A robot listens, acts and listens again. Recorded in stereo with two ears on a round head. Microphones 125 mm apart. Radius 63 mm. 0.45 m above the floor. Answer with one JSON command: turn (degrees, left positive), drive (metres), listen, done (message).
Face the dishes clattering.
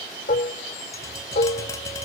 {"turn": 55}
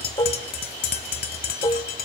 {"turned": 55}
{"turn": 35}
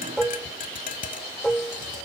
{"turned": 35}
{"done": "Facing the dishes clattering, under 1 m away."}